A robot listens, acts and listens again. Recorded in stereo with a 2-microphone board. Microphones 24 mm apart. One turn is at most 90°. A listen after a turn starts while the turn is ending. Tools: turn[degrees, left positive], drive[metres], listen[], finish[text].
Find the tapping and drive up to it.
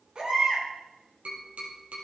Action: turn[-90]
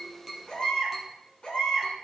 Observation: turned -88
Action: listen[]
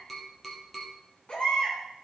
Action: drive[1.0]
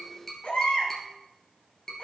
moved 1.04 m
Thought: The tapping is now 20° left.
Action: turn[20]
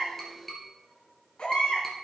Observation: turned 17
Action: drive[1.0]
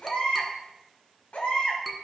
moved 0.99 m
Action: drive[1.0]
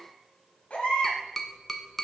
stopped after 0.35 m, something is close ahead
Thought: The tapping is now 10° left.
Action: turn[10]
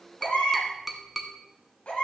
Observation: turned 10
Action: finish[Arrived at the tapping, straight ahead.]